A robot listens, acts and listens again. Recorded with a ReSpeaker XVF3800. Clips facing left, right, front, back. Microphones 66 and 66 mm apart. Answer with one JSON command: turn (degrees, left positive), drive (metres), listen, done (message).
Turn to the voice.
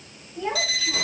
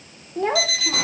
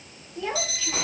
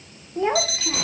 {"turn": -125}
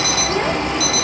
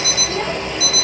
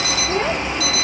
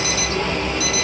{"listen": true}
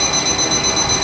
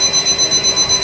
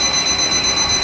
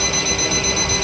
{"listen": true}
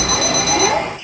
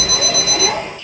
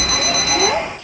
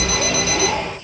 {"turn": 20}
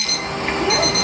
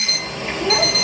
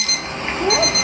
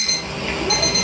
{"listen": true}
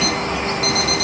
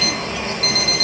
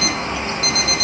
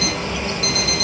{"listen": true}
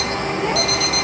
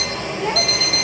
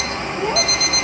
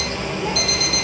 {"done": "I heard a child speaking from this way, but can't make it out now."}